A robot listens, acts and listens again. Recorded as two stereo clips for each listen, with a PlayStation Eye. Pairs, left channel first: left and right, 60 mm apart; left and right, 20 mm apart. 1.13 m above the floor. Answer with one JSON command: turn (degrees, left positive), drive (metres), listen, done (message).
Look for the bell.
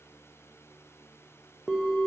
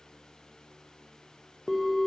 {"turn": 30}
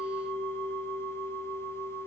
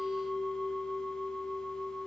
{"turn": 150}
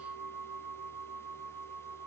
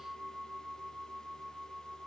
{"done": "Found it: a bell, straight ahead."}